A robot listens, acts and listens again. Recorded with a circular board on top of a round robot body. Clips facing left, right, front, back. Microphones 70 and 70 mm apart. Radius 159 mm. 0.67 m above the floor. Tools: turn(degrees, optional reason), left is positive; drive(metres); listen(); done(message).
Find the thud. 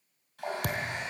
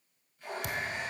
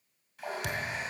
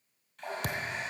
turn(degrees=130, reason="The thud: 130° left.")
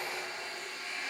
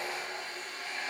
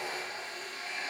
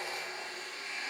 done("Facing where the thud came from. I can't hear it now.")